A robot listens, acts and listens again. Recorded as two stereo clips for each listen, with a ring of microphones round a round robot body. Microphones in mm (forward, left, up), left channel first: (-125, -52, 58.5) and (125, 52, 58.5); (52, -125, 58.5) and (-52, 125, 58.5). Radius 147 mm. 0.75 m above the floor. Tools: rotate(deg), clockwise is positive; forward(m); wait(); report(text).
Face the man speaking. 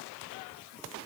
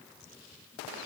wait()
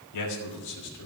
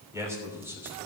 rotate(165)
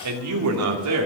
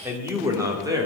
rotate(-35)
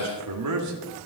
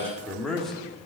rotate(-20)
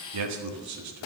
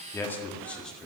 rotate(-20)
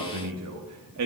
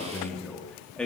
rotate(-20)
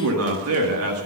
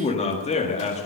report("Found it: a man speaking, straight ahead, 1 to 2 m away.")